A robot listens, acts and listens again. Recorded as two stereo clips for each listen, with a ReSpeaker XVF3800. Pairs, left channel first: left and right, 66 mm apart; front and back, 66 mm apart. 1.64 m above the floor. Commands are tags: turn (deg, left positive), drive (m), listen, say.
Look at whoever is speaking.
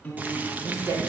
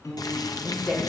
<turn deg="-80"/>
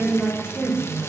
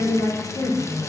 <turn deg="-15"/>
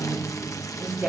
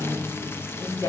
<say>Found it: a woman speaking, straight ahead.</say>